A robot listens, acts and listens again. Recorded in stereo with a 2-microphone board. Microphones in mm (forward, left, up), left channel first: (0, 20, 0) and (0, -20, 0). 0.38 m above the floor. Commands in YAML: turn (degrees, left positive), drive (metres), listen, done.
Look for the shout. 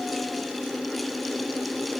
listen: true
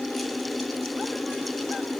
listen: true
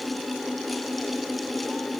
done: "I can't make out a shout to turn to."